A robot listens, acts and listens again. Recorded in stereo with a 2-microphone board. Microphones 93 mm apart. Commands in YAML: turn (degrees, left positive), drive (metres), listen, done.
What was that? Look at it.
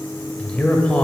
turn: 30
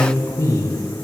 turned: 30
turn: 135
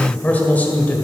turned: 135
turn: 25
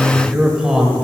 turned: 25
done: "Facing the man speaking, 1 to 2 m away."